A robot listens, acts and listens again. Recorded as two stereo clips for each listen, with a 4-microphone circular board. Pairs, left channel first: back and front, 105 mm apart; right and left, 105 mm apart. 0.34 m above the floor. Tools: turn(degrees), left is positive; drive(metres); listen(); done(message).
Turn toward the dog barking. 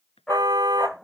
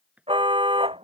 turn(degrees=95)
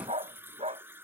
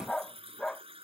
done("Found it: a dog barking, straight ahead.")